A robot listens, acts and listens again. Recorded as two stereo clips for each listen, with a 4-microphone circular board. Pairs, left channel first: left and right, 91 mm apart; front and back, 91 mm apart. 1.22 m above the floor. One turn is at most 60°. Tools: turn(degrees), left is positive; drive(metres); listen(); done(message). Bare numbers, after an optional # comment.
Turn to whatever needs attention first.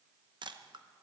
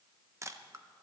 listen()
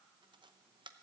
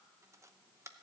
listen()
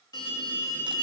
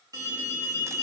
# The alarm: 130° left.
turn(60)
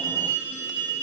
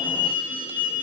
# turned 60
# The alarm is now 70° left.
turn(60)
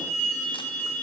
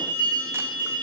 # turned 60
# The alarm is now 10° left.
turn(10)
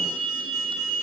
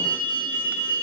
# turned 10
done("Found it: an alarm, straight ahead.")